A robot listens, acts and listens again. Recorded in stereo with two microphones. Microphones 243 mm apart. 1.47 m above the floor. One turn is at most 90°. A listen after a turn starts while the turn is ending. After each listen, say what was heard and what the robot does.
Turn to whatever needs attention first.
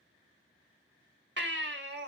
The baby crying: about 50° right or 130° right. Turn 50° right.
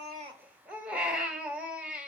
Facing the baby crying, 1 to 2 m away.